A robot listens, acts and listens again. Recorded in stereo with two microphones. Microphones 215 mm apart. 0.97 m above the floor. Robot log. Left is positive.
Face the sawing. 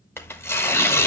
cmd idle
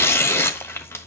cmd idle
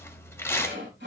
note: The sawing: about 65° right or 115° right.
cmd yaw -65
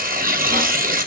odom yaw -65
cmd idle
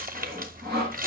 note: So it is at 50° right.
cmd yaw -50
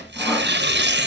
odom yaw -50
cmd idle
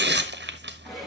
end: Found it: sawing, straight ahead.